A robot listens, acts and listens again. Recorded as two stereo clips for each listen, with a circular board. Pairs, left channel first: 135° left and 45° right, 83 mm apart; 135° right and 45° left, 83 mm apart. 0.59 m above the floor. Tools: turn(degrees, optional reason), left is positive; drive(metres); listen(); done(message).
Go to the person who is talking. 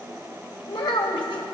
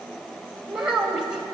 turn(degrees=125, reason="The child speaking: 125° left.")
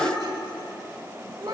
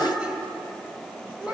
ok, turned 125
turn(degrees=-30, reason="The child speaking is now 30° right.")
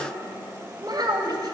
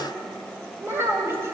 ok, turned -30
turn(degrees=-15, reason="The child speaking is now 15° right.")
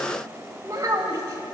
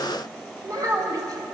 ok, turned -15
drive(metres=1.0)
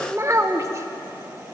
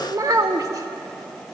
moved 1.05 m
drive(metres=1.0)
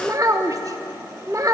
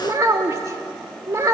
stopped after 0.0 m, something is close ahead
done("Arrived at the child speaking, straight ahead.")